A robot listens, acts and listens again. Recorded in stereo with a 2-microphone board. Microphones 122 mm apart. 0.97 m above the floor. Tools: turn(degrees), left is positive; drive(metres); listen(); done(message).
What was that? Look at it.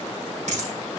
turn(degrees=-70)
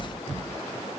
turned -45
listen()
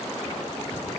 done("I heard a dropped coin, but can't make it out now. It was about 25° right or 65° right.")